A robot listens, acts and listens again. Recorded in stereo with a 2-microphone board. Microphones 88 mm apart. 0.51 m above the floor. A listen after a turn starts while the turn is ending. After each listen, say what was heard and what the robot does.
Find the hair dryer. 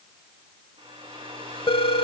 Turn 90° right.
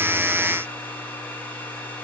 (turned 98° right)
So it is at 15° left. Turn 15° left.
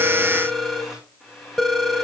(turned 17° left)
Found it: a hair dryer, straight ahead, over 4 m away.